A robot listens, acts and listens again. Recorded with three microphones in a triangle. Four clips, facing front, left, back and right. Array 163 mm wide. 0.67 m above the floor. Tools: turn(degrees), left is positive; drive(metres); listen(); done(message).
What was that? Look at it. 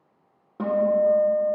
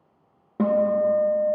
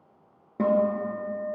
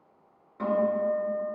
turn(degrees=105)
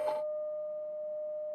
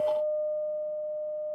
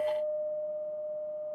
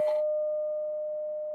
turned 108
done("Found it: a guitar, straight ahead, 1 to 2 m away.")